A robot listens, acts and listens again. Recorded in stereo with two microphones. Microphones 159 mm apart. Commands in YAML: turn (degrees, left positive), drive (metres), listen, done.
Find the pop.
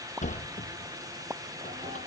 turn: -15
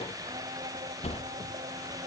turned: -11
listen: true
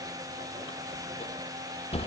done: "I heard a pop, but can't make it out now. It was about 5° right or 155° right."